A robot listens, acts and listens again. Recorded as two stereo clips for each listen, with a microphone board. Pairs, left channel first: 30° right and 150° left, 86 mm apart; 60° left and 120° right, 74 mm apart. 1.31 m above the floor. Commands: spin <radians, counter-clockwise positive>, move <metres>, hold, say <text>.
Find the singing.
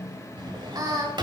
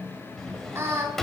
spin -2.97
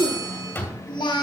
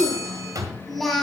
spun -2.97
spin -0.44
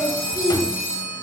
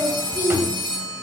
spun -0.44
spin 0.17
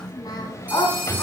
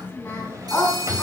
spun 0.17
say Found it: singing, straight ahead.